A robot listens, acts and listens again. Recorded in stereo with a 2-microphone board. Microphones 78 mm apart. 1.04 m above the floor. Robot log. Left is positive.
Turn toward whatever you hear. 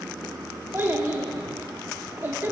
note: The child speaking: about 25° right or 155° right.
cmd yaw -25
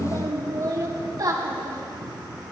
note: So it is at 130° right.
cmd yaw -130
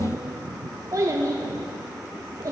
note: The child speaking is now 45° right.
cmd yaw -45
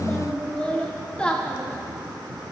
note: The child speaking is now 15° left.
cmd yaw +15
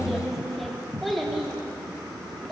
end: Found it: a child speaking, straight ahead, 1 to 2 m away.